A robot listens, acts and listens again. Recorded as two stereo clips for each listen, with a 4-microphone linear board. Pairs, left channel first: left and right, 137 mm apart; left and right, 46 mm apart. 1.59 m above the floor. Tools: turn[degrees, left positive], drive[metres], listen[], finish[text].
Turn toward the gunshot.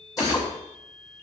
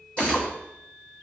Action: turn[-30]
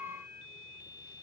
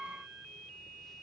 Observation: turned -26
Action: listen[]
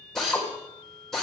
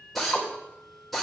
Action: finish[I heard a gunshot, but can't make it out now. It was about 10° left or 140° right.]